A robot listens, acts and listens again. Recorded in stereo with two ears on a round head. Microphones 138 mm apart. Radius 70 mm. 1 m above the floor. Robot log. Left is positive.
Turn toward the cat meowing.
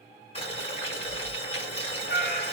note: The cat meowing: about 60° left or 120° left.
cmd yaw +60
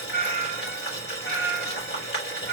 note: So it is at 80° left.
cmd yaw +80
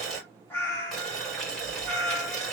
note: The cat meowing is now 20° left.
cmd yaw +20
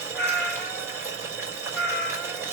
end: Found it: a cat meowing, straight ahead, 2 to 4 m away.